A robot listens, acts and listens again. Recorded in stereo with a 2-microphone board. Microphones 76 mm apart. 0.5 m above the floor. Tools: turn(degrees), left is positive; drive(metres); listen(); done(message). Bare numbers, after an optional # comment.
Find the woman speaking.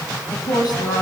# The woman speaking: about 65° left or 115° left.
turn(65)
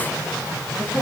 done("Facing the woman speaking, over 4 m away.")